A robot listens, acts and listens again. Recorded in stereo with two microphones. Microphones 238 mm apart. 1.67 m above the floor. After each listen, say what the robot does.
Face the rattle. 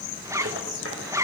Turn 60° right.
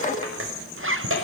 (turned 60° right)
Turn 60° right.
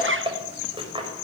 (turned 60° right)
Turn 20° right.
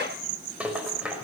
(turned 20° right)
Facing the rattle.